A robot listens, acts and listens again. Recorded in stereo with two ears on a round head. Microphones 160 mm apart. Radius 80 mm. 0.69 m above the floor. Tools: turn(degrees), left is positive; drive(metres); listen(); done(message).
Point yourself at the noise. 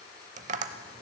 turn(degrees=-45)
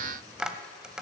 done("Found it: tapping, straight ahead, under 1 m away.")